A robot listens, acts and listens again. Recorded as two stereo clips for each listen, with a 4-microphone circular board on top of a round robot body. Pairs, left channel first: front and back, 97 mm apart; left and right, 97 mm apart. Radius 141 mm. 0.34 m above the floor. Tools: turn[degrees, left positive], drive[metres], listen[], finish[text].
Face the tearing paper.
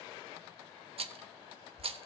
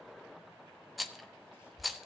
Action: listen[]
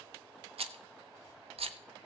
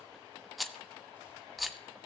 Action: listen[]
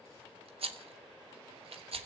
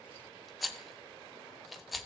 Action: finish[I can't make out tearing paper to turn to.]